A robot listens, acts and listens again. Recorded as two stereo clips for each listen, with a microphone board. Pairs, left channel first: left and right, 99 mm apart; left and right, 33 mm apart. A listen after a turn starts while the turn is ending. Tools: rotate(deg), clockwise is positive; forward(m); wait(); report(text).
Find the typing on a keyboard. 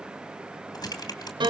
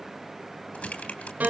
rotate(-40)
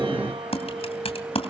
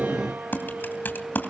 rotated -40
rotate(-95)
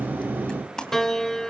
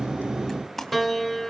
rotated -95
report("Found it: typing on a keyboard, straight ahead, 2 to 4 m away.")